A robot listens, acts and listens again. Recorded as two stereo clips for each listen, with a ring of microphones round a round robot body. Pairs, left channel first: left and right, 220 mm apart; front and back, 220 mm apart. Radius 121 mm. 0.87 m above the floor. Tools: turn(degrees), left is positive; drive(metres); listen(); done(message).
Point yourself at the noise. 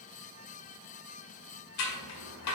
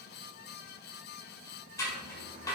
turn(degrees=80)
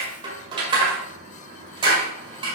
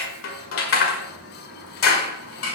turn(degrees=-20)
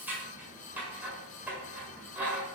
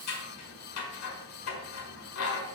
done("Found it: scissors, straight ahead.")